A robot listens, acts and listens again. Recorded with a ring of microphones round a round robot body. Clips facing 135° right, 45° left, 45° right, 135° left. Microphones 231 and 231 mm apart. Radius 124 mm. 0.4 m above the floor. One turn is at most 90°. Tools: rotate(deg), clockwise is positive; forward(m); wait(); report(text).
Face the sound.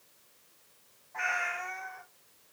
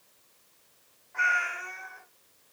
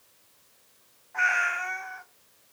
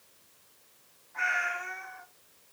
rotate(35)
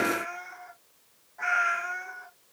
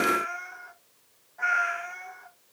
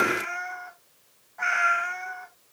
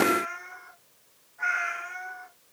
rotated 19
rotate(55)
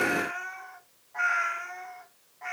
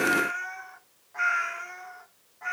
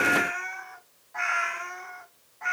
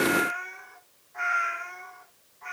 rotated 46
rotate(35)
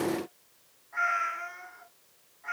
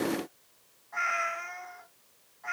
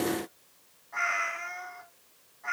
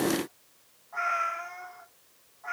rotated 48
rotate(-15)
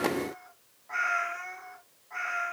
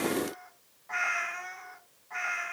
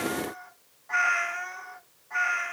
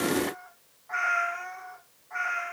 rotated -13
report("Facing the cat meowing.")